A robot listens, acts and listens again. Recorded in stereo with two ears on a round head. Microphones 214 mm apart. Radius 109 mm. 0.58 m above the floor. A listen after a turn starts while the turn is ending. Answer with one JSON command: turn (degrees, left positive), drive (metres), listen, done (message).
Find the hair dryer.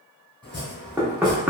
{"listen": true}
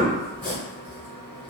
{"listen": true}
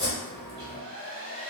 {"turn": -40}
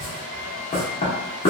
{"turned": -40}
{"turn": -90}
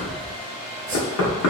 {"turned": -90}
{"turn": -40}
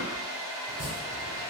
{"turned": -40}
{"turn": -20}
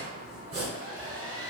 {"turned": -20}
{"done": "Found it: a hair dryer, straight ahead, 1 to 2 m away."}